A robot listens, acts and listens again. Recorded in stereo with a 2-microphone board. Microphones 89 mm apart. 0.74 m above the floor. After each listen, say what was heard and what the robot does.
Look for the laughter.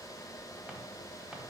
Keep listening.
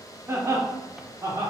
The laughter: about 40° right or 140° right. Turn 40° right.
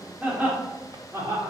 The laughter: about 35° right or 145° right. Turn 35° right.
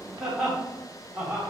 So it is at 20° right. Turn 20° right.
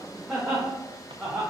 The laughter is now 10° right. Turn 10° right.
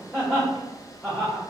Found it: laughter, straight ahead.